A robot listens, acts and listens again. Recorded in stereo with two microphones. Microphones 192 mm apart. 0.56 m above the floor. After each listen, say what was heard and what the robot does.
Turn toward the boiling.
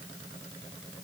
Keep listening.
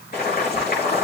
The boiling: about 50° left or 130° left. Turn 50° left.
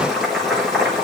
Facing the boiling, over 4 m away.